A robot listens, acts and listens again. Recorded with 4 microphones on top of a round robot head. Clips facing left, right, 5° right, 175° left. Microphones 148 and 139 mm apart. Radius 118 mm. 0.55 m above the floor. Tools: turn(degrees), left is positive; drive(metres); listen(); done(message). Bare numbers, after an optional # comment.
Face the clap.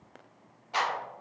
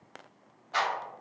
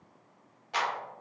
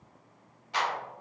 # The clap: 15° left.
turn(15)
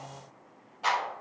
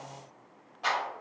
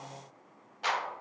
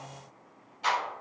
done("Found it: a clap, straight ahead.")